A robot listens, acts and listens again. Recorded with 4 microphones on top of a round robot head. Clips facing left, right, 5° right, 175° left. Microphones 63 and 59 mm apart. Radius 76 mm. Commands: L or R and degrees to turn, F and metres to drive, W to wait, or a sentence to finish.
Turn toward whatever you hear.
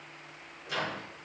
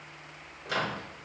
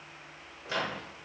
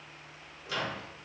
R60
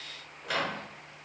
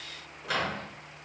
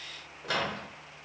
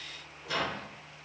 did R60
Facing the microwave, 1 to 2 m away.